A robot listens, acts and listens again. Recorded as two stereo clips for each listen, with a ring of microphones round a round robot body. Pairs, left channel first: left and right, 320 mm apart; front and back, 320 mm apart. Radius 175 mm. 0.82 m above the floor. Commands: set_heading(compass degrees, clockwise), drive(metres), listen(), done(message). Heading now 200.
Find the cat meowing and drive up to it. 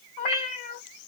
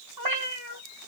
set_heading(70)
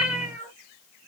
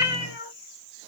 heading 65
drive(1.0)
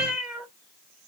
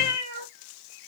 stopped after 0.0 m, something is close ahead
done("Blocked. The cat meowing is further on, straight ahead.")